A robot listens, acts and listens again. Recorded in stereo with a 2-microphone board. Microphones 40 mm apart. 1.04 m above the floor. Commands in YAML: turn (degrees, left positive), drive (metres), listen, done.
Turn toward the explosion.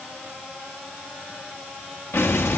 turn: 90
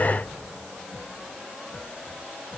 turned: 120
turn: -30
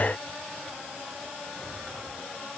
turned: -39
turn: 10
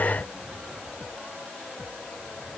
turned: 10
done: "Facing where the explosion came from. I can't hear it now."